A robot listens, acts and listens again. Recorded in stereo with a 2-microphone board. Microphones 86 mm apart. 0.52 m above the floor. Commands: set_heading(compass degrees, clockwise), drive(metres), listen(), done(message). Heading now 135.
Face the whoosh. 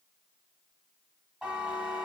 listen()
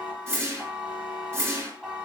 set_heading(165)
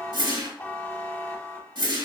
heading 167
set_heading(282)
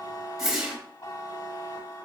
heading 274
done("Facing the whoosh, 1 to 2 m away.")